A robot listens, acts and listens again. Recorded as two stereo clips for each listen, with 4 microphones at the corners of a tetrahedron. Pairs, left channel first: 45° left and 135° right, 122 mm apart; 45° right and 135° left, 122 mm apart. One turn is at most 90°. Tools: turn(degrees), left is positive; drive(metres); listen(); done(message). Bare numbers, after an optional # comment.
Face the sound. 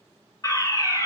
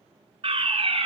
# The fire alarm: 100° left.
turn(90)
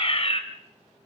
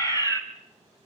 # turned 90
# The fire alarm is now 15° left.
turn(15)
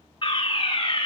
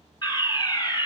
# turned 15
done("Found it: a fire alarm, straight ahead.")